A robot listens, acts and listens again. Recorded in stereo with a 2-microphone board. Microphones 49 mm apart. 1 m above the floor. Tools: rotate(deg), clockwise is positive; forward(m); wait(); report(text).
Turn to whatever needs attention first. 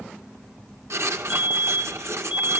rotate(25)
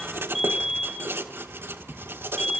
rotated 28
report("Facing the fire alarm, over 4 m away.")